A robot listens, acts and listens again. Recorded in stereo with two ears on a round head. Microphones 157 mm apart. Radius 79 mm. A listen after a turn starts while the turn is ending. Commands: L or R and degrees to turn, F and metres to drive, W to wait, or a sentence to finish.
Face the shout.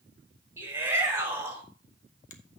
R30
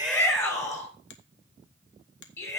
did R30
L15
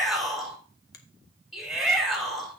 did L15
Found it: a shout, straight ahead, over 4 m away.